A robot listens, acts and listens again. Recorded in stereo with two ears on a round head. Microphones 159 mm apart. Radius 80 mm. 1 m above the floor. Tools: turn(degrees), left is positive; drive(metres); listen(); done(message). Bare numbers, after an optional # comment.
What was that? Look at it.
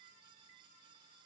listen()
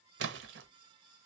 # The splash: about 65° right or 115° right.
turn(-65)
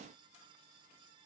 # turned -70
listen()
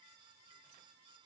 done("I heard a splash, but can't make it out now. It was about 5° left or 45° right.")